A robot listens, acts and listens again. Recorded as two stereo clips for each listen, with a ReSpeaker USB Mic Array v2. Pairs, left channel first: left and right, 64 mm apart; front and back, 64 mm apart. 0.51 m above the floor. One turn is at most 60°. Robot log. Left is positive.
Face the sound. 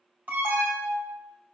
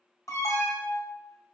note: The alarm: 30° right.
cmd yaw -30
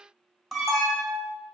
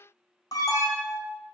end: Found it: an alarm, straight ahead.